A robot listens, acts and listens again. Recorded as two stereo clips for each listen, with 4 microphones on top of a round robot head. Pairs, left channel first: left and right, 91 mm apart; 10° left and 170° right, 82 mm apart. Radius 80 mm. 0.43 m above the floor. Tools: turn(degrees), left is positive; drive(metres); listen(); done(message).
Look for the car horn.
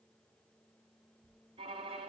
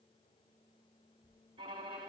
listen()
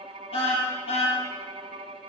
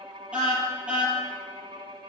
turn(degrees=115)
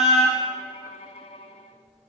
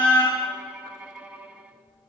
done("Facing the car horn.")